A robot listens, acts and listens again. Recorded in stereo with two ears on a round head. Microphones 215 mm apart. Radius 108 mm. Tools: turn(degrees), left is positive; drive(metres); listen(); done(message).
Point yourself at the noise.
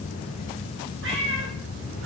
turn(degrees=-50)
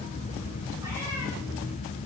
listen()
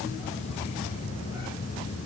listen()
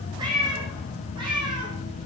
turn(degrees=-20)
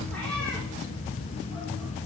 listen()
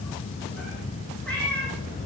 done("Found it: a cat meowing, straight ahead, over 4 m away.")